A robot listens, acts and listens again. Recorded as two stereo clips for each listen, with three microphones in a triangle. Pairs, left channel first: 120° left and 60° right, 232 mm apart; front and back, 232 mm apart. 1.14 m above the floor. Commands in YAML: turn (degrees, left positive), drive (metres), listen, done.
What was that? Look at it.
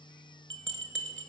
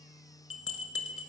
turn: -25
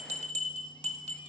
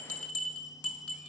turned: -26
done: "Found it: a bell, straight ahead, under 1 m away."